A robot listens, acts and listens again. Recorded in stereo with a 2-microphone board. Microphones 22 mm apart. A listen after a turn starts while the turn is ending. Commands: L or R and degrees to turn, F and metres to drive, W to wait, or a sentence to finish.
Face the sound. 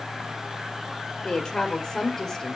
L20
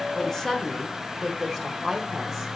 L30
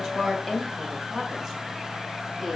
L15
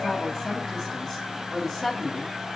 L25
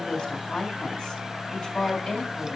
L130
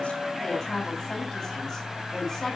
Found it: a woman speaking, straight ahead.